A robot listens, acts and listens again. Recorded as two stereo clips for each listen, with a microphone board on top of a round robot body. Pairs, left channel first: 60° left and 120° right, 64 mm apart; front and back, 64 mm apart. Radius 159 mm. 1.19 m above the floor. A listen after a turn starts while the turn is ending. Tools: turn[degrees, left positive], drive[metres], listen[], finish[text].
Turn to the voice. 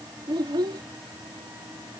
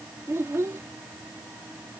Thought: The child speaking: 130° right.
Action: turn[-130]
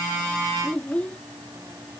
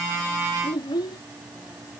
Thought: The child speaking is now 15° right.
Action: turn[-15]
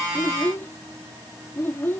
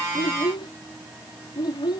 Action: finish[Found it: a child speaking, straight ahead.]